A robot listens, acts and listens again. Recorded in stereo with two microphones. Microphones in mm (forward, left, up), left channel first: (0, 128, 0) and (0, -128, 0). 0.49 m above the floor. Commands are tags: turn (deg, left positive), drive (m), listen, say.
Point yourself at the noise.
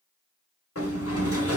<turn deg="65"/>
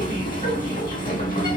<turn deg="35"/>
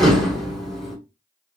<say>Found it: a sliding door, straight ahead.</say>